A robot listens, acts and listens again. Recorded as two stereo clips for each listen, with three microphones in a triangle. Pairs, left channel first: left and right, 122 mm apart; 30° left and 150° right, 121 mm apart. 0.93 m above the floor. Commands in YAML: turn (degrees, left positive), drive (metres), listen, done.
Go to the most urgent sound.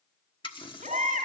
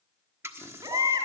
turn: -95
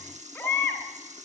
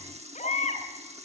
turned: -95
turn: 10
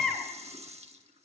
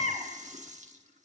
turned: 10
drive: 1.0
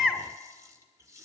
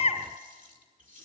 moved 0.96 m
drive: 1.0
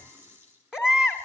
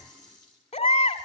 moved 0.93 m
drive: 1.0
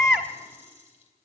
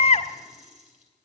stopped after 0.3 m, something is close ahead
done: "Arrived at the baby crying, straight ahead."